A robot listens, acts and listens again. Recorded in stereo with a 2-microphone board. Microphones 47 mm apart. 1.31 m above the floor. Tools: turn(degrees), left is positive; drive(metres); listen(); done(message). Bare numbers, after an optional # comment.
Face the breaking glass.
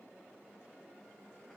listen()
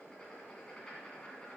listen()
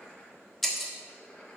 turn(30)
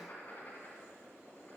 listen()
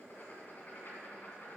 done("I heard breaking glass, but can't make it out now. It was about 25° right or 145° left.")